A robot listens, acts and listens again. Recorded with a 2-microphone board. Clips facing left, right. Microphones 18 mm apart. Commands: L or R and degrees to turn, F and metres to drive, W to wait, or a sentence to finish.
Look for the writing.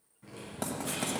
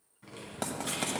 R30
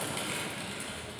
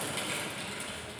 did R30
R120
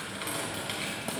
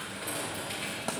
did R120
W
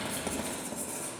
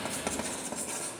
R35
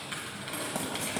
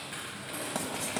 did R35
R10
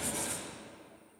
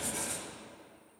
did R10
W
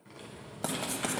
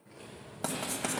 Facing the writing, 1 to 2 m away.